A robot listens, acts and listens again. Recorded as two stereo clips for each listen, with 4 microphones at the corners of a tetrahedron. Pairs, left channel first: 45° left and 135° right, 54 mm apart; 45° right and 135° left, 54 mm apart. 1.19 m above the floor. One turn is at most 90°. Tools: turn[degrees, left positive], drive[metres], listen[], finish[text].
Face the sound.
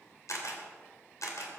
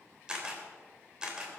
Thought: The camera shutter: 60° left.
Action: turn[60]
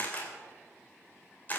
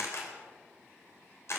Thought: The camera shutter is now 10° right.
Action: turn[-10]
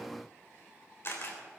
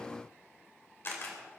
Action: finish[Facing the camera shutter.]